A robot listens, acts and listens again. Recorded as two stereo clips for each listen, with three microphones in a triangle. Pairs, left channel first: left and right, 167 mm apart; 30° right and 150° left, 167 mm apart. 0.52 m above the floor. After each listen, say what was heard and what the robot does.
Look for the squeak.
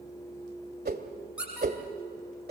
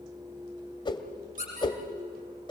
The squeak: 170° right. Turn 170° right.
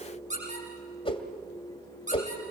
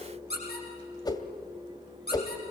The squeak is now 50° right. Turn 50° right.
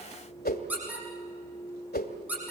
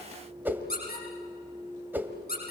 The squeak is now 10° right. Turn 10° right.
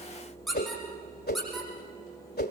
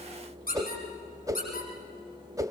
Facing the squeak, over 4 m away.